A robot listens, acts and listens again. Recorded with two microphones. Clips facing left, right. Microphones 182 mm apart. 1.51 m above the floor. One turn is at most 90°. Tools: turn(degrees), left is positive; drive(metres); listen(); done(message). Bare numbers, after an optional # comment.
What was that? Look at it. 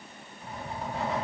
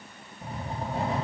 # The writing: about 30° right or 150° right.
turn(-30)
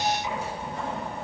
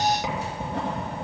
# So it is at 115° right.
turn(-90)
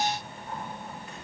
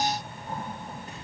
# The writing is now 35° right.
turn(-35)
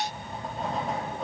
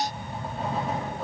done("Facing the writing.")